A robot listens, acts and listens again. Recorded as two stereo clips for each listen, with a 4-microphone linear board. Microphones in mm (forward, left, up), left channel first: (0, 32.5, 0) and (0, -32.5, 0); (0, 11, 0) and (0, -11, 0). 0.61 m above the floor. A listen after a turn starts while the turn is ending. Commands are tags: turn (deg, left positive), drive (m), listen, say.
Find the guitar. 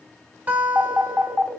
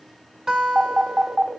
<turn deg="-25"/>
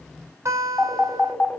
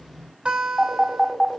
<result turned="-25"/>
<turn deg="-125"/>
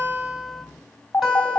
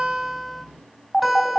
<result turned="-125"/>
<say>Facing the guitar.</say>